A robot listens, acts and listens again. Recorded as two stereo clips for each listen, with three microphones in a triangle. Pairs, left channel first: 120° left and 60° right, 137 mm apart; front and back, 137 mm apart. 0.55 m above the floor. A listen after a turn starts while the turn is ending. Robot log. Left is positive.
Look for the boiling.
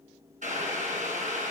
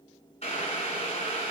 note: The boiling: 40° right.
cmd yaw -40
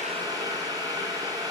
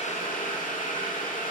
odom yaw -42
end: Found it: boiling, straight ahead.